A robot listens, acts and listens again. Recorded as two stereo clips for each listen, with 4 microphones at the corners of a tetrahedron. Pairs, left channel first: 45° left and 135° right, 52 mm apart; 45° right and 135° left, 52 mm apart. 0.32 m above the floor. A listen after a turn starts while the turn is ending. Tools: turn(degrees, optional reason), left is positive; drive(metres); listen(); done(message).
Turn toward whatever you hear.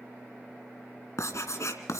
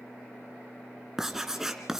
turn(degrees=55, reason="The writing: 55° left.")
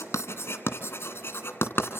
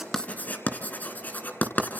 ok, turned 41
turn(degrees=10, reason="The writing is now 10° left.")
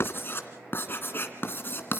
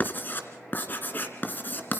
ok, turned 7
done("Facing the writing.")